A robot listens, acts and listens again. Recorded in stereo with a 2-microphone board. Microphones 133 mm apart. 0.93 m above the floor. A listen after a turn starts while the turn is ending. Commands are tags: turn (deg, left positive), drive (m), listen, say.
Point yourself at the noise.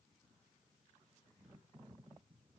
<listen/>
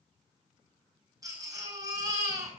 <turn deg="-25"/>
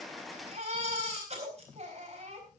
<turn deg="-130"/>
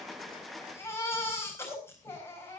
<turn deg="20"/>
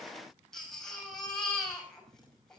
<say>Found it: a baby crying, straight ahead.</say>